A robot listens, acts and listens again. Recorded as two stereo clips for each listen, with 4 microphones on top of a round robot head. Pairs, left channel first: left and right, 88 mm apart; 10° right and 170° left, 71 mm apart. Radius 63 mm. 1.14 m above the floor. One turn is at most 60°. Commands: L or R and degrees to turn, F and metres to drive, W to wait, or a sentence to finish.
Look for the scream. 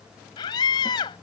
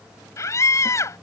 L40
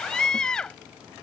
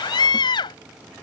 Found it: a scream, straight ahead.